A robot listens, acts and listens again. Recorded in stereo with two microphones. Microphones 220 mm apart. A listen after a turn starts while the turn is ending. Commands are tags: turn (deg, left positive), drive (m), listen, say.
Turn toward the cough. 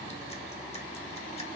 <listen/>
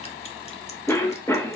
<turn deg="30"/>
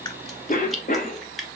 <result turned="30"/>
<turn deg="135"/>
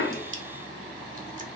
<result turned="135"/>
<listen/>
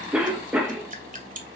<say>Facing the cough, under 1 m away.</say>